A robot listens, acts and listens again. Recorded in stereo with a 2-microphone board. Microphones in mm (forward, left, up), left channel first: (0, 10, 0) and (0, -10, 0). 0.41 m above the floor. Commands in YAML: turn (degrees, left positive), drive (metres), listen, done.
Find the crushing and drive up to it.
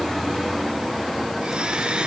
listen: true
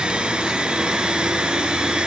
listen: true
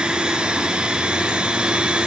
done: "I can't make out crushing to turn to."